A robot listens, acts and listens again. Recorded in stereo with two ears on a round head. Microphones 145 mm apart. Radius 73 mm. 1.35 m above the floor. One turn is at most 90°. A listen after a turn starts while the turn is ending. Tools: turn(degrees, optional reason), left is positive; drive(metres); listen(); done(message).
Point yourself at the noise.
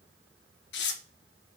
turn(degrees=90)
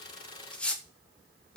done("Facing the tearing paper.")